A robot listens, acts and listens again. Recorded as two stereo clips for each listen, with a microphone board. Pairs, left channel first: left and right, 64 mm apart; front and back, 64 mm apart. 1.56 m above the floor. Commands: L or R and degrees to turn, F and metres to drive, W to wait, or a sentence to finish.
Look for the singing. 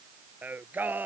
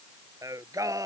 R150
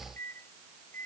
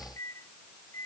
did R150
W
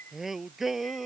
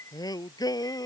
Found it: singing, straight ahead.